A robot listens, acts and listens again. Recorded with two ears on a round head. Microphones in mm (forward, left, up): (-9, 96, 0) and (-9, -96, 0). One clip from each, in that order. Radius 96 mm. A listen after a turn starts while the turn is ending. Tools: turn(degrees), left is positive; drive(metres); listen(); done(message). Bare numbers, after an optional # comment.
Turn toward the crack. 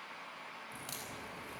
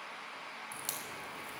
# The crack: about 45° right or 135° right.
turn(-45)
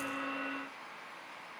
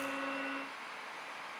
listen()
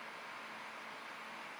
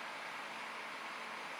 done("I heard a crack, but can't make it out now. It was about straight ahead or 90° right.")